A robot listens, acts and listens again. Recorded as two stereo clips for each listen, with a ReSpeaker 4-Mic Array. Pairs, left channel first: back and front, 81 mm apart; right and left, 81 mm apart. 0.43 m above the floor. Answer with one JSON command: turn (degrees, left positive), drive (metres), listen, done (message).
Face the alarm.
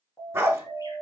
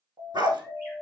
{"turn": 125}
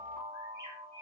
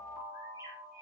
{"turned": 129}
{"done": "Facing the alarm."}